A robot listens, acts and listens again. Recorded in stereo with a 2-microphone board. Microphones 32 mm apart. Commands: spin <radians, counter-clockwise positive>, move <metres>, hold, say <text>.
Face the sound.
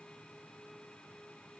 hold
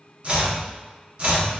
spin -0.70
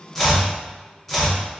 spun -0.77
say Found it: chopping, straight ahead.